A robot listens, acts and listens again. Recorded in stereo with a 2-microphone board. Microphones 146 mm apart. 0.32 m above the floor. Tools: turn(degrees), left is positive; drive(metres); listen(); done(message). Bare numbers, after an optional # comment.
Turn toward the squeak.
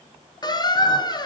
# The squeak: about 30° left or 150° left.
turn(30)
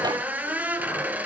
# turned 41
# So it is at 10° right.
turn(-10)
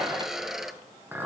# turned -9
done("Facing the squeak.")